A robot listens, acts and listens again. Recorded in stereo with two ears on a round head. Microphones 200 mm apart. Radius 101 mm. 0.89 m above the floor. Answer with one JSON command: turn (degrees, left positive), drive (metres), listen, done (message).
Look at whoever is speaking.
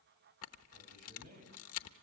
{"turn": -35}
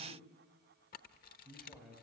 {"done": "Facing the man speaking, over 4 m away."}